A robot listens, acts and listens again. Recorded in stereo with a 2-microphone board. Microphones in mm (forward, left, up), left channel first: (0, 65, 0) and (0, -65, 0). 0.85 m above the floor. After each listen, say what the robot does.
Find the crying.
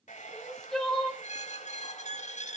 Turn 30° left.
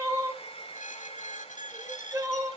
Turn 25° right.
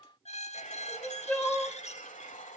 Turn 10° left.
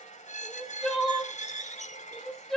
Found it: crying, straight ahead, 1 to 2 m away.